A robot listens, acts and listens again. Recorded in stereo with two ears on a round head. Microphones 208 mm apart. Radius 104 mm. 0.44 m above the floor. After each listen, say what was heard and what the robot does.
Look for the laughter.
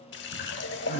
The laughter: about 30° left or 150° left. Turn 30° left.
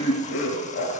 So it is at 115° left. Turn 115° left.
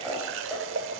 Facing the laughter.